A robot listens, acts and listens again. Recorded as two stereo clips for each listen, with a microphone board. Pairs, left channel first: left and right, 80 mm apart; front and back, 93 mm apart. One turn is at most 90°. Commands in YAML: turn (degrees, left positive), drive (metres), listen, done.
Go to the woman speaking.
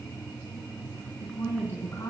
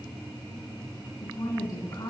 turn: 40
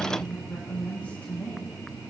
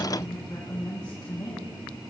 turn: 20
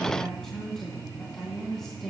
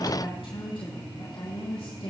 drive: 1.0
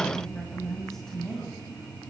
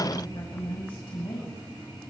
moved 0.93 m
drive: 1.0
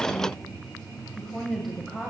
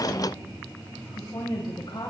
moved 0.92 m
drive: 1.0
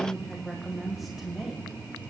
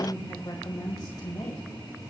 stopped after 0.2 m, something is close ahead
done: "I am next to the woman speaking."